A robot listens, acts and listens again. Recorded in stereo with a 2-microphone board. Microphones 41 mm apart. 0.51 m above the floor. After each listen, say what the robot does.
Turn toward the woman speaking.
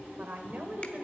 Turn 50° right.
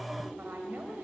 Turn 55° right.
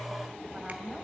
Turn 15° right.
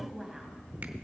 Turn 10° right.
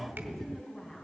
Turn 10° left.
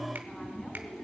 Facing the woman speaking, 2 to 4 m away.